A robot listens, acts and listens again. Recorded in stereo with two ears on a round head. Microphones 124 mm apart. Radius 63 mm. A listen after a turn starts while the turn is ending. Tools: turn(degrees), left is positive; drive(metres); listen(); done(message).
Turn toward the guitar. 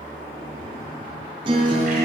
turn(degrees=-35)
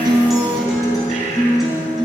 done("Found it: a guitar, straight ahead.")